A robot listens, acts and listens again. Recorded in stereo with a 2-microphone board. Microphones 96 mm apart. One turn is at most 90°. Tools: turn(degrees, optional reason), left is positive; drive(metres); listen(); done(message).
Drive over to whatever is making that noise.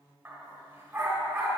turn(degrees=-15, reason="The dog barking: about 15° right or 165° right.")
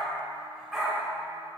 drive(metres=1.0)
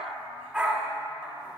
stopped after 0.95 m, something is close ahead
done("I am next to the dog barking.")